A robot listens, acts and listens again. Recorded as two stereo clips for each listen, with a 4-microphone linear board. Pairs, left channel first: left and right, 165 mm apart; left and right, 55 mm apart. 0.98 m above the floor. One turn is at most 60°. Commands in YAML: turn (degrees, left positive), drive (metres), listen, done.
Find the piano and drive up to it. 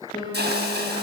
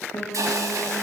turn: 30
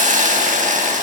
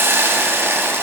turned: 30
listen: true
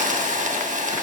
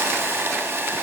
listen: true
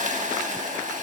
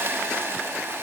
done: "I heard a piano, but can't make it out now. It was about straight ahead or 120° left. I did not reach it."